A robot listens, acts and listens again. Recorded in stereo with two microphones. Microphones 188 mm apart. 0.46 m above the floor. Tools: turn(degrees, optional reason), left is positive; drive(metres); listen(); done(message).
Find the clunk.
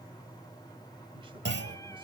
turn(degrees=-90)
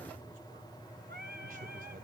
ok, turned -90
done("I heard a clunk from this way, but can't make it out now.")